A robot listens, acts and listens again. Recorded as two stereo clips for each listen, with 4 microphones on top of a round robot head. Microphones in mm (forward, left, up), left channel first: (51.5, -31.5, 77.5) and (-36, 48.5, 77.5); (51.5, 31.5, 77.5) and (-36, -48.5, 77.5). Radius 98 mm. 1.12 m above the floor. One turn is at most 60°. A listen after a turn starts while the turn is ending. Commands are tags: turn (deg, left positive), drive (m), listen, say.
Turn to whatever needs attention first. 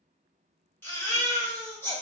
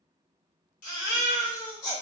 <turn deg="30"/>
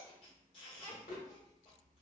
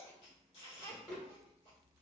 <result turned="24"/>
<turn deg="10"/>
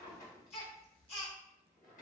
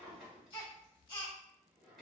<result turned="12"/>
<say>Found it: a baby crying, straight ahead.</say>